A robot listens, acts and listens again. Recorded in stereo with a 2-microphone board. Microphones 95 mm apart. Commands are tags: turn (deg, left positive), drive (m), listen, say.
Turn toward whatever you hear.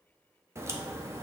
<turn deg="-30"/>
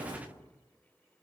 <turn deg="-120"/>
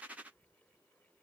<say>Facing where the crack came from. I can't hear it now.</say>